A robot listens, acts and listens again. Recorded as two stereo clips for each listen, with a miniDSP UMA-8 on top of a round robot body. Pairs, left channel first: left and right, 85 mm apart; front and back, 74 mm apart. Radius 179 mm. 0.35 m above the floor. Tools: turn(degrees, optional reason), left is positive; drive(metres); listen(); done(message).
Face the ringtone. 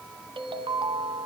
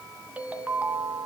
turn(degrees=-110, reason="The ringtone: 110° right.")
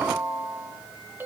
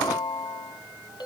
turn(degrees=-20, reason="The ringtone is now 20° right.")
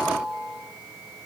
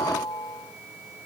done("Facing the ringtone.")